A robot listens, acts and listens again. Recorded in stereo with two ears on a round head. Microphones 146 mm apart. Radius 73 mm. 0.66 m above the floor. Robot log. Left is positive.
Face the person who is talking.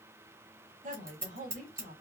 note: The woman speaking: about 50° right or 130° right.
cmd yaw -50
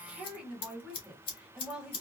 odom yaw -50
end: Facing the woman speaking, 1 to 2 m away.